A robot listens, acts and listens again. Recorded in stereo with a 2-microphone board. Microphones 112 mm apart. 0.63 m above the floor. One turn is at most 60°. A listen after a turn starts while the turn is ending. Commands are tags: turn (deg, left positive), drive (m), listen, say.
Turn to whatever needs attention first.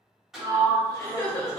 <turn deg="35"/>
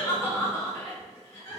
<turn deg="60"/>
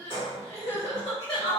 <turn deg="60"/>
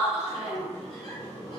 <turn deg="30"/>
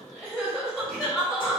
<say>Found it: crying, straight ahead.</say>